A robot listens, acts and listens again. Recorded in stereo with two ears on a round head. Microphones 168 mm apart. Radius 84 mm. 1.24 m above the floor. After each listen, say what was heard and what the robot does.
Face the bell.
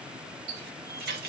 Keep listening.
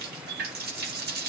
Keep listening.
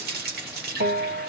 The bell: about 45° right or 135° right. Turn 45° right.
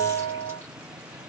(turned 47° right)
So it is at 90° right. Turn 90° right.
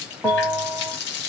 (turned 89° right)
Facing the bell, 1 to 2 m away.